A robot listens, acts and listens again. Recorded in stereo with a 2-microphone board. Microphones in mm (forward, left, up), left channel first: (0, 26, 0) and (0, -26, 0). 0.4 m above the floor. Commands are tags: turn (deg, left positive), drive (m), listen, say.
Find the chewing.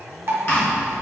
<turn deg="55"/>
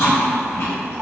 <turn deg="65"/>
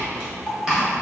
<turn deg="-15"/>
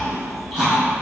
<say>Facing the chewing, 1 to 2 m away.</say>